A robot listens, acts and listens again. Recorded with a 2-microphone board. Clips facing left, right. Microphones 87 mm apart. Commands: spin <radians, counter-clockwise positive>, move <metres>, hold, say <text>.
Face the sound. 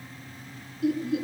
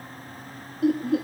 spin -0.96
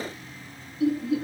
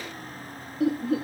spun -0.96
spin -1.05
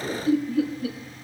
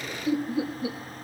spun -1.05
spin -0.35
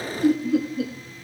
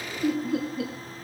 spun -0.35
say Found it: laughter, straight ahead, 1 to 2 m away.